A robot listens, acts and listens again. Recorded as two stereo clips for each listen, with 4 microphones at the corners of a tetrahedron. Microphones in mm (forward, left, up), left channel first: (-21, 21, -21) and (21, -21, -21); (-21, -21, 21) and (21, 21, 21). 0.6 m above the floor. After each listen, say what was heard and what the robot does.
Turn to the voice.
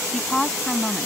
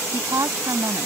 The woman speaking: 50° left. Turn 50° left.
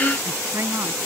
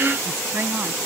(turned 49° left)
Facing the woman speaking.